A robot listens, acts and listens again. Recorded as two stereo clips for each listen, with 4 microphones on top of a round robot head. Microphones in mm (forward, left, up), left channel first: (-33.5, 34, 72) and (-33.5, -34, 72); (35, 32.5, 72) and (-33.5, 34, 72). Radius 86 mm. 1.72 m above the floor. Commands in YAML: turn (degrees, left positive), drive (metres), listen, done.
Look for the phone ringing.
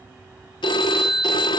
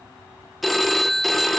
turn: 90
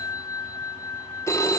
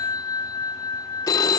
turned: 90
turn: 30
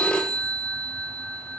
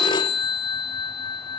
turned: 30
turn: 10
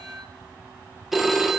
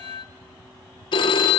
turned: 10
done: "Facing the phone ringing, 1 to 2 m away."